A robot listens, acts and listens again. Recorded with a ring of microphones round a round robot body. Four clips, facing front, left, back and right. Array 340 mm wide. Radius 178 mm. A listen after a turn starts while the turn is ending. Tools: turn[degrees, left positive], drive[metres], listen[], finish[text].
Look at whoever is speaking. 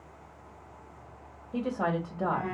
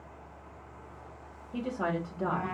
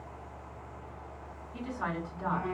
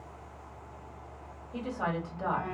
Thought: The woman speaking: 10° left.
Action: turn[10]
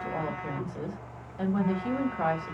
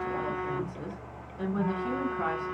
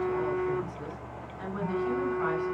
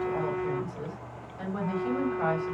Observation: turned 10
Action: finish[Found it: a woman speaking, straight ahead, 1 to 2 m away.]